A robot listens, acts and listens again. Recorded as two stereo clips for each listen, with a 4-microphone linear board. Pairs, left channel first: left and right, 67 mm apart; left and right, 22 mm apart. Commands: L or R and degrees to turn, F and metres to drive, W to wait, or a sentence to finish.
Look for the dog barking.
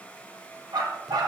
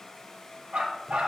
R75
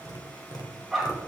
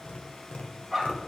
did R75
Found it: a dog barking, straight ahead.